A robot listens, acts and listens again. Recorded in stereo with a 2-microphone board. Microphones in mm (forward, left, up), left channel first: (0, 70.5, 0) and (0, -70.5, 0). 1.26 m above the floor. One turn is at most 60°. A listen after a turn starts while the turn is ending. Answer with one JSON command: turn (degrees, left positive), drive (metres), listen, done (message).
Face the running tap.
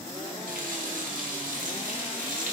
{"turn": -60}
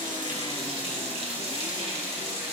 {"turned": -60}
{"turn": -45}
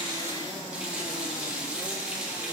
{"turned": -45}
{"turn": -10}
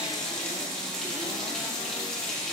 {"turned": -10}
{"done": "Facing the running tap, 1 to 2 m away."}